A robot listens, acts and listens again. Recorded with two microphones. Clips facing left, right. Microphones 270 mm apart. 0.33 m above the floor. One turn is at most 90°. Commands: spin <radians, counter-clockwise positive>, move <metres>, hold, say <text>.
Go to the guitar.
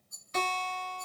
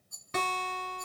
spin -1.22
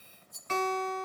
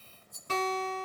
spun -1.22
spin -0.70
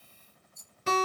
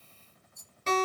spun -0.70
spin 0.17
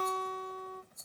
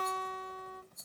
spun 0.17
move 1.0
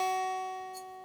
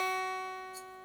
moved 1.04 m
move 1.0
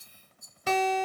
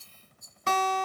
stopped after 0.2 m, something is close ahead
say Arrived at the guitar, straight ahead.